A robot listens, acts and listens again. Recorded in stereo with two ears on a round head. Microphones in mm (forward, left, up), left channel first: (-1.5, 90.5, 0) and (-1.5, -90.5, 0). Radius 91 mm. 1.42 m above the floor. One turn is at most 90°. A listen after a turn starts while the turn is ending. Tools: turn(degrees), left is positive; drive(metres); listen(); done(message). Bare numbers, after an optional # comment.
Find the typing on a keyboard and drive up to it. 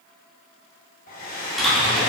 turn(30)
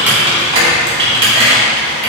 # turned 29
# So it is at 30° right.
turn(-30)
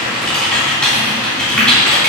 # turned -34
drive(1.0)
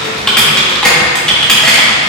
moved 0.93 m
drive(1.0)
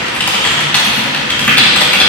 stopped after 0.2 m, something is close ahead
# The typing on a keyboard is now 10° left.
turn(10)
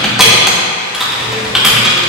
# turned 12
done("Arrived at the typing on a keyboard, straight ahead.")